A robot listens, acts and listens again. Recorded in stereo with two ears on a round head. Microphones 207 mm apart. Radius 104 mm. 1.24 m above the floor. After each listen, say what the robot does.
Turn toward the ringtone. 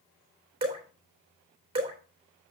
Keep listening.
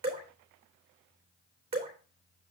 Keep listening.
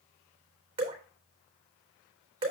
I can't make out a ringtone, only dripping.